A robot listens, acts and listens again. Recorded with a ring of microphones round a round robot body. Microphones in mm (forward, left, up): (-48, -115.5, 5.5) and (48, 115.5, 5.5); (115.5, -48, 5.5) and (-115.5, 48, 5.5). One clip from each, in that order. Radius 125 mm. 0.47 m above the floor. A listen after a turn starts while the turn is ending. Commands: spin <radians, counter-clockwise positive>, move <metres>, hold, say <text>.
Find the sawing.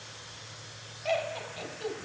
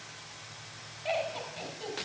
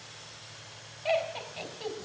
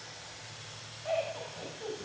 hold
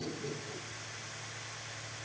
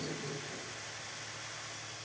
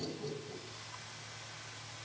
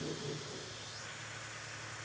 hold
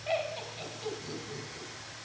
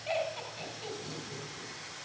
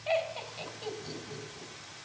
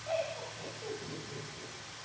say I can't make out sawing, only laughter.